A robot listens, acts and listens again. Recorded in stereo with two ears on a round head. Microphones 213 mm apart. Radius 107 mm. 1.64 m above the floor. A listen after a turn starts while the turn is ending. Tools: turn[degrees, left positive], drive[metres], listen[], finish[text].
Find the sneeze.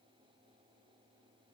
Action: listen[]
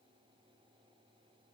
Action: listen[]
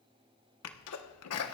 Thought: The sneeze: about 70° left or 110° left.
Action: turn[70]
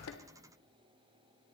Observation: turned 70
Action: listen[]
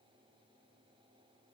Action: finish[I heard a sneeze, but can't make it out now. It was about straight ahead or 40° left.]